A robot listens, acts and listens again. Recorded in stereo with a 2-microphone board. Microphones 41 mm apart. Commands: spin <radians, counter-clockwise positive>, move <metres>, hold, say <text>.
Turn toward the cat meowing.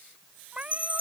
spin -0.52
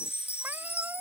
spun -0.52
hold
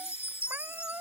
spin -2.09
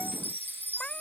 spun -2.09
hold
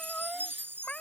spin 0.44
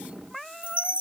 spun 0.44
say Found it: a cat meowing, straight ahead.